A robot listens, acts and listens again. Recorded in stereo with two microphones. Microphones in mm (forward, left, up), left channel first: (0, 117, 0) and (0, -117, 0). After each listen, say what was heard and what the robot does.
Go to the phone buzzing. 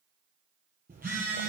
The phone buzzing: about 35° right or 145° right. Turn 35° right.
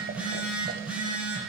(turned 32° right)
Drive 1.0 m forward.
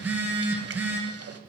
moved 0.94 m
The phone buzzing is now 10° right. Turn 10° right.
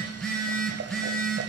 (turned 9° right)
Drive 1.0 m forward.
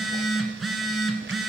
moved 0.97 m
Drive 1.0 m forward.
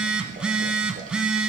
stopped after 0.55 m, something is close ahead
Arrived at the phone buzzing, straight ahead.